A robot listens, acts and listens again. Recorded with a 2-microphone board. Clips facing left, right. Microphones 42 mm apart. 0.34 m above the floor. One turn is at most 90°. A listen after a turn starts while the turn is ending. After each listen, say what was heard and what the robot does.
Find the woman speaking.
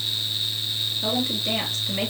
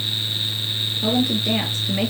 The woman speaking: about 20° right or 160° right. Turn 20° right.
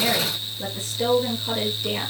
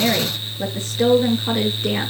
So it is at 135° right. Turn 90° right.
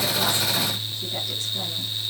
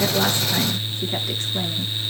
Nothing new. It was at 45° right. Turn 45° right.
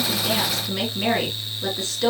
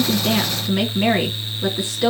The woman speaking is now 15° right. Turn 15° right.
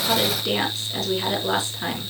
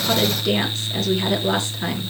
Facing the woman speaking, over 4 m away.